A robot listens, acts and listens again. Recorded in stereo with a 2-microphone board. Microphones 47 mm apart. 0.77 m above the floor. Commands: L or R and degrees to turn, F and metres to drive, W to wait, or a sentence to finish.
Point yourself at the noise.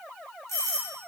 L70
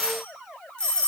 L25
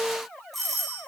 Facing the doorbell.